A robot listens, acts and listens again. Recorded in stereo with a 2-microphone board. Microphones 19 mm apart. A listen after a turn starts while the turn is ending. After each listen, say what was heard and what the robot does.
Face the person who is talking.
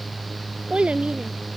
Turn 90° right.
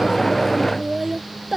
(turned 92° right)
So it is at 15° right. Turn 15° right.
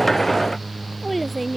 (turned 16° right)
Facing the child speaking.